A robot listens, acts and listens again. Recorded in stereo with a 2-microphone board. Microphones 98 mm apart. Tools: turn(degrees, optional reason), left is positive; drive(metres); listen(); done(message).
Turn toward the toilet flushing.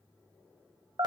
listen()
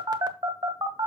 listen()
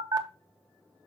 done("I can't make out a toilet flushing to turn to.")